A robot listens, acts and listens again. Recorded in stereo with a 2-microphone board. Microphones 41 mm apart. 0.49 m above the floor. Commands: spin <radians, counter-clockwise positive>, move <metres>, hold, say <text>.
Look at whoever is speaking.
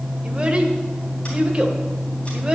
spin -0.44
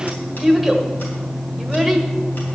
say Found it: a child speaking, straight ahead, 1 to 2 m away.